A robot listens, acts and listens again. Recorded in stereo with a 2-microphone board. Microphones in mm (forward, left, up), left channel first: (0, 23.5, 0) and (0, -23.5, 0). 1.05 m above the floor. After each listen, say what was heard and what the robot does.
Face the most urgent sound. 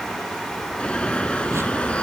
The alarm: about 25° left or 155° left. Turn 25° left.
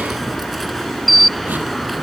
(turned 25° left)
Found it: an alarm, straight ahead.